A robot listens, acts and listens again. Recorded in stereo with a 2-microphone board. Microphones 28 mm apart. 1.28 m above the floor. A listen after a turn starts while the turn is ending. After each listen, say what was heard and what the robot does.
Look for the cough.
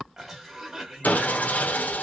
The cough: about 20° right or 160° right. Turn 20° right.
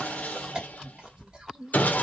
So it is at 140° right. Turn 140° right.
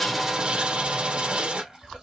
The cough is now 25° right. Turn 25° right.
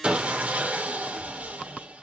Keep listening.
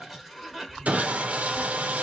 Found it: a cough, straight ahead, 2 to 4 m away.